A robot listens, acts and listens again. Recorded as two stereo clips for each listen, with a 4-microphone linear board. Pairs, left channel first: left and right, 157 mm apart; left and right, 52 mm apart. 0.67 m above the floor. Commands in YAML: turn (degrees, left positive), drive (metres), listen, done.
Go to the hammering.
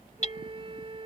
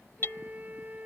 turn: 50
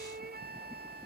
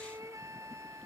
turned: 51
listen: true
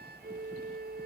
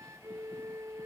listen: true
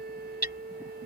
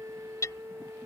turn: 80
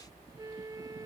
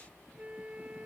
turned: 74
listen: true
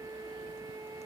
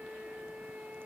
listen: true
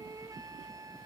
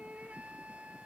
done: "I heard hammering from this way, but can't make it out now. I did not reach it."